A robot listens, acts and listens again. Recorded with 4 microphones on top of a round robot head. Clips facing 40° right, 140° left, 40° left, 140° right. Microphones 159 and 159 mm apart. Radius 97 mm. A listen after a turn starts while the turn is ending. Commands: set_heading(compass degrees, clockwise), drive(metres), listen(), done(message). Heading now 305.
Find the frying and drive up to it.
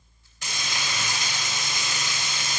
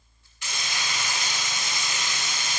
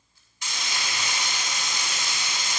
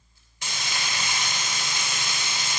set_heading(40)
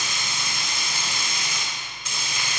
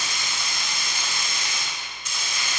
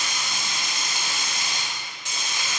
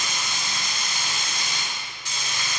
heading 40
set_heading(70)
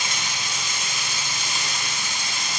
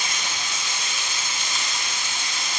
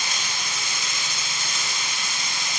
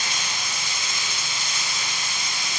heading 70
set_heading(55)
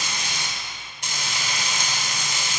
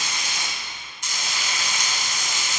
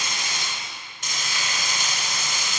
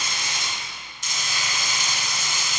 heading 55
drive(1.0)
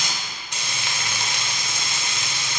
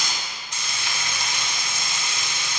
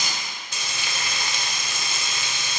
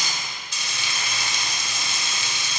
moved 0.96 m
drive(1.0)
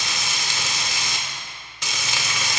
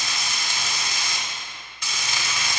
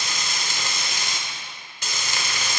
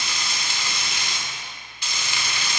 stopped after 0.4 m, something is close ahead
set_heading(65)
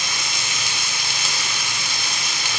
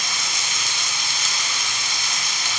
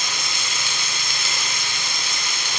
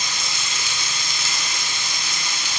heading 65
done("Arrived at the frying, straight ahead.")